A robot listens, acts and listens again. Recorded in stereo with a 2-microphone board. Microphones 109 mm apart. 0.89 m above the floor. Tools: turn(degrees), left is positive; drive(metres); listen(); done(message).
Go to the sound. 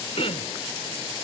turn(degrees=65)
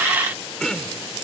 drive(metres=1.0)
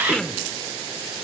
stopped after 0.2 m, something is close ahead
turn(degrees=10)
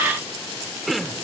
done("Blocked. The throat clearing is further on, straight ahead.")